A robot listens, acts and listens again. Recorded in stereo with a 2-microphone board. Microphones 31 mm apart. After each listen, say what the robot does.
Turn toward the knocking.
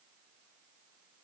Keep listening.
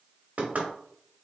Turn 55° right.
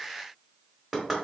Found it: knocking, straight ahead, 1 to 2 m away.